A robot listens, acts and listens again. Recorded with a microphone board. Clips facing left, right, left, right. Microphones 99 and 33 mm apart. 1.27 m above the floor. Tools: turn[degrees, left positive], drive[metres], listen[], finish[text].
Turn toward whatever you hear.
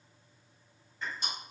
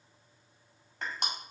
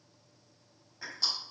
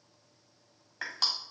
Thought: The crushing: about 75° right or 105° right.
Action: turn[-75]
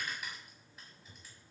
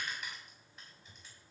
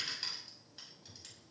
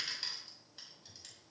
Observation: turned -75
Action: finish[Facing the crushing, over 4 m away.]